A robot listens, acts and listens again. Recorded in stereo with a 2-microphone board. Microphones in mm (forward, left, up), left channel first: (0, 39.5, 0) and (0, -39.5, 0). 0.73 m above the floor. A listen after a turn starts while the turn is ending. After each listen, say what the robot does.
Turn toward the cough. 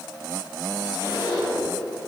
Keep listening.
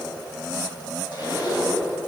Keep listening.
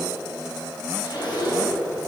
I can't make out a cough to turn to.